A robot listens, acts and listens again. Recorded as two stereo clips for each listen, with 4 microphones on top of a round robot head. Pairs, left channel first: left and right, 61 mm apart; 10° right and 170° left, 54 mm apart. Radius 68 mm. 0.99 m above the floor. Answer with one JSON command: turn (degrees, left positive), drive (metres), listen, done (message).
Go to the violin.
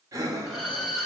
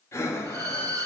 {"turn": -170}
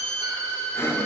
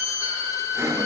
{"turn": 20}
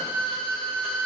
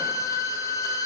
{"drive": 1.0}
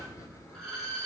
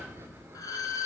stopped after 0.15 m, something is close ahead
{"done": "Blocked. The violin is further on, straight ahead."}